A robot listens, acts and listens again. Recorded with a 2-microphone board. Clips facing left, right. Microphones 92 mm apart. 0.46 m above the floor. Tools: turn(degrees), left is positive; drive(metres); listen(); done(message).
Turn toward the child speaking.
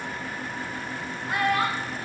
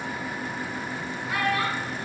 turn(degrees=45)
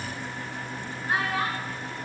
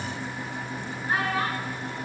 turn(degrees=15)
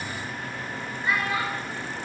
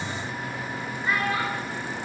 done("Facing the child speaking.")